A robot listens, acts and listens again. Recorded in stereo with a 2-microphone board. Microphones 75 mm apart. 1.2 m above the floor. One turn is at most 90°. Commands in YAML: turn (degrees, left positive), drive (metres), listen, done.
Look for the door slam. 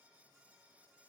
listen: true
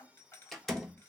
turn: 30
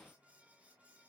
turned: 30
listen: true
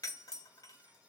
done: "I heard a door slam, but can't make it out now. It was about 25° right or 145° left."